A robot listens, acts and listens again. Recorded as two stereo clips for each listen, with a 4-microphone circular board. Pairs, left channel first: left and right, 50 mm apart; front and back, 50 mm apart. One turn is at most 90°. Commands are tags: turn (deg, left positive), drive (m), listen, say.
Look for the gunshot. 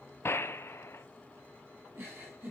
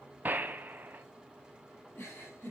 <turn deg="90"/>
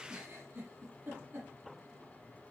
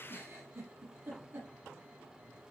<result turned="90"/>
<turn deg="35"/>
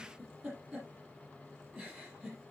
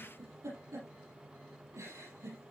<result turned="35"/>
<say>Facing where the gunshot came from. I can't hear it now.</say>